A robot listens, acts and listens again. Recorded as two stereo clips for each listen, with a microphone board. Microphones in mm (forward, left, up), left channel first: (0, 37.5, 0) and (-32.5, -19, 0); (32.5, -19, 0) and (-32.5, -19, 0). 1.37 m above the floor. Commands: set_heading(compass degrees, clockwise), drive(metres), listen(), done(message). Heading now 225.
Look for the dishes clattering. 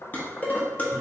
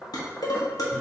done("Facing the dishes clattering, 1 to 2 m away.")